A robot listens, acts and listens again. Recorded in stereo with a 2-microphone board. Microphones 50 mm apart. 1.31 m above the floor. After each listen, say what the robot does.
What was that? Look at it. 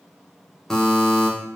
Turn 30° left.
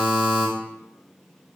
Turn 15° right.
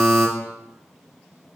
Found it: a buzzer, straight ahead.